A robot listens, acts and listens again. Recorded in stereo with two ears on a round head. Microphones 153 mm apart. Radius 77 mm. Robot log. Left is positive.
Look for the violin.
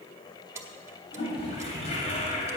cmd idle
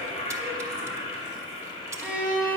cmd yaw -30
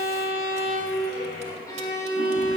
note: So it is at 20° left.
cmd yaw +20
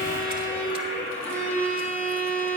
note: The violin is now 10° left.
cmd yaw +10
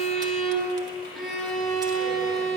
end: Facing the violin.